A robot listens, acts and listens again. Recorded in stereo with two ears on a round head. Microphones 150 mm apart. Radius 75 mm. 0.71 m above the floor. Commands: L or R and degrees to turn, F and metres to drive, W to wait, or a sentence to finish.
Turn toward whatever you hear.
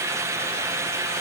W
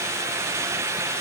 W
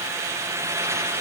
I can't make out anything to turn to.